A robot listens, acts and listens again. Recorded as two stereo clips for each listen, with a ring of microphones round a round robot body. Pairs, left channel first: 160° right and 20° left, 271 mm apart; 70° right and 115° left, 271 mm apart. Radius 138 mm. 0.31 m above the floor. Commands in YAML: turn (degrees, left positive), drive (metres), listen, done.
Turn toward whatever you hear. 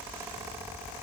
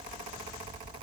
listen: true
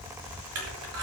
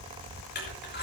turn: -15
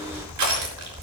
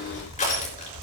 done: "Found it: crushing, straight ahead, over 4 m away."